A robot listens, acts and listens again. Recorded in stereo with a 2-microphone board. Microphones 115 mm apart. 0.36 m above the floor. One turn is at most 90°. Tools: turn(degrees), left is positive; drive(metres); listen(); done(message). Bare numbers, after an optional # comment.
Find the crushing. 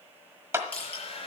turn(30)
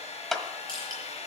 # So it is at 135° left.
turn(90)
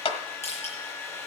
# The crushing is now 70° left.
turn(70)
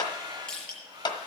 done("Facing the crushing.")